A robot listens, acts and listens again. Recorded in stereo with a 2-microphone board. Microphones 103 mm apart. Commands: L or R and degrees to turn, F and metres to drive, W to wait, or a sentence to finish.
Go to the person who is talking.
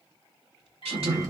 R90
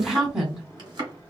F1.0
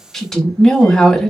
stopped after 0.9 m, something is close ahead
Arrived at the woman speaking, straight ahead.